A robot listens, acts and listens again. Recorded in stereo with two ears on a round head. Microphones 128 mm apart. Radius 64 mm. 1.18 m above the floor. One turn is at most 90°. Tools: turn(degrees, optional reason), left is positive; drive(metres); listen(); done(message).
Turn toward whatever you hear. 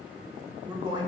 turn(degrees=-30, reason="The man speaking: about 30° right or 150° right.")
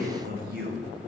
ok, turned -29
turn(degrees=-90, reason="So it is at 110° right.")
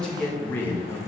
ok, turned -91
turn(degrees=20, reason="The man speaking is now 20° left.")
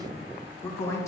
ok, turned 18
turn(degrees=20, reason="The man speaking is now 20° left.")
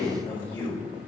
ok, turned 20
turn(degrees=15, reason="The man speaking is now 15° left.")
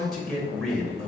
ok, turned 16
done("Facing the man speaking.")